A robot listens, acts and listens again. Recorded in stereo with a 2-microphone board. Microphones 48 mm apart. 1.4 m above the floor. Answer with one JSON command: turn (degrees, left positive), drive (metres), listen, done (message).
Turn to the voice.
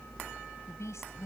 {"turn": 90}
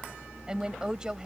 {"turn": -15}
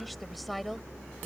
{"done": "Found it: a woman speaking, straight ahead."}